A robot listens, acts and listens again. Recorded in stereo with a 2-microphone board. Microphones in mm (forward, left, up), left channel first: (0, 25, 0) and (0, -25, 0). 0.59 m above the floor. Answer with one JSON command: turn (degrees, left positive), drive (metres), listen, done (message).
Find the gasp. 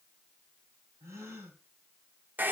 {"turn": -90}
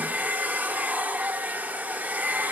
{"done": "Facing where the gasp came from. I can't hear it now."}